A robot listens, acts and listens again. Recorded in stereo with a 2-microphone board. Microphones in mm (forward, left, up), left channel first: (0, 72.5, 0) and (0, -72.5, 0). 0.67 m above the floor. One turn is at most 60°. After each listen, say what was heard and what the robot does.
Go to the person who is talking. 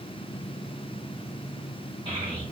The child speaking: about 35° right or 145° right. Turn 35° right.
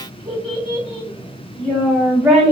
Drive 1.0 m forward.
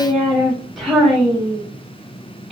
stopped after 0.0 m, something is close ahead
Something is in my way. I am facing the child speaking but have not reached it.